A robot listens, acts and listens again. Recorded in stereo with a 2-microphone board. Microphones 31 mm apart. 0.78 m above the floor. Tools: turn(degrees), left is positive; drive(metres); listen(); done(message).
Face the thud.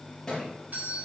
turn(degrees=30)
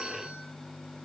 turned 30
listen()
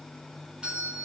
done("I heard a thud, but can't make it out now. It was about 15° right or 135° left.")